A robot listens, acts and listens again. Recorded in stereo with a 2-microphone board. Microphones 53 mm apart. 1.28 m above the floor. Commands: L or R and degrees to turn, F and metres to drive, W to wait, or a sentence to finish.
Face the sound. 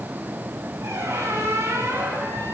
R70
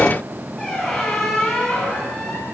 Facing the squeak, over 4 m away.